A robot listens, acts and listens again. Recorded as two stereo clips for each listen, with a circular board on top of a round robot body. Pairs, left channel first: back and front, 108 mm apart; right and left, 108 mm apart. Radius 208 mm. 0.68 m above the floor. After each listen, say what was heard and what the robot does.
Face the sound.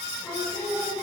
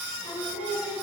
The singing: 100° right. Turn 100° right.
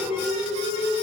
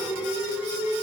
The singing is now 10° right. Turn 10° right.
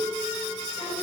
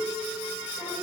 Keep listening.
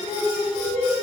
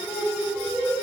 Found it: singing, straight ahead, 2 to 4 m away.